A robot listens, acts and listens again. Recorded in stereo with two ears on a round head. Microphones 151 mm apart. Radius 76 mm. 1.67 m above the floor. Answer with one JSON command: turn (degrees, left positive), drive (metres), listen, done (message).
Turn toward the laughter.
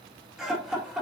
{"turn": -30}
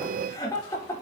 {"turn": 15}
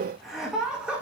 {"done": "Facing the laughter."}